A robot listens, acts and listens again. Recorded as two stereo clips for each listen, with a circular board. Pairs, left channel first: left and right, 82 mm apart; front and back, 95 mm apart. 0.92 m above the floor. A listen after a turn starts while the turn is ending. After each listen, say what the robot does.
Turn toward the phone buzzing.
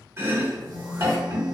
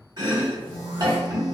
Turn 55° right.
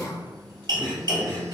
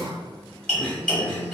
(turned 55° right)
Keep listening.
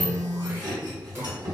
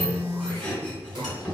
Found it: a phone buzzing, straight ahead.